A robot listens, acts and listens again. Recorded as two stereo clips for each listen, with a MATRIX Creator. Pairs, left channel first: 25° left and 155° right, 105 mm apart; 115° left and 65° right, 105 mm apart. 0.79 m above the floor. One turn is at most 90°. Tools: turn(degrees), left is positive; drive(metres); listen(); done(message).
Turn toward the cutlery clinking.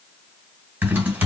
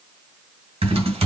listen()
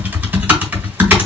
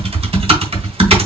listen()
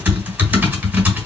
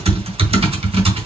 done("I can't make out cutlery clinking, only typing on a keyboard.")